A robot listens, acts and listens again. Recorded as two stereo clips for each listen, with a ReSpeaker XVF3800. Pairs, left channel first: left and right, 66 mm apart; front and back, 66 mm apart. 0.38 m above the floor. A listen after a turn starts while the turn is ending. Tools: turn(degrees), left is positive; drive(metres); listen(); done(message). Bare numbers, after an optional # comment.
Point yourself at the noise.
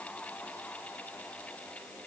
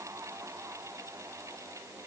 listen()
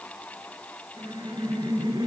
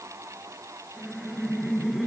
# The laughter: 95° right.
turn(-95)
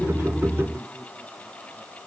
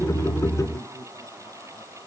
# The laughter is now 10° left.
turn(10)
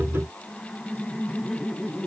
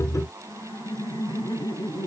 done("Facing the laughter, over 4 m away.")